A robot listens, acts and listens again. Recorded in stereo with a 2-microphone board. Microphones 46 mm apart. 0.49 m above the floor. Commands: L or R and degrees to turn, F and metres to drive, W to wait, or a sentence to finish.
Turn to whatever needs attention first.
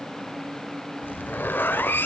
W
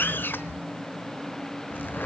W
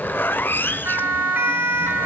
R45
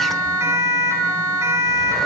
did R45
R85
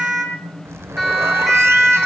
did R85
Facing the siren, over 4 m away.